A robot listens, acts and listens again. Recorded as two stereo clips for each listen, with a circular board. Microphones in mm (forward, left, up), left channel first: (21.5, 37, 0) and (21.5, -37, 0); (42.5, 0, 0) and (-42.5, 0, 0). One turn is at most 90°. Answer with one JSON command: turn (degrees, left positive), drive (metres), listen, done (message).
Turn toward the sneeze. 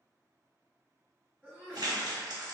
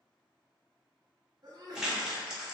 {"turn": 90}
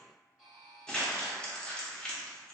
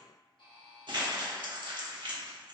{"turn": 80}
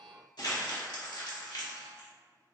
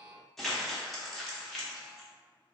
{"done": "I heard a sneeze from this way, but can't make it out now."}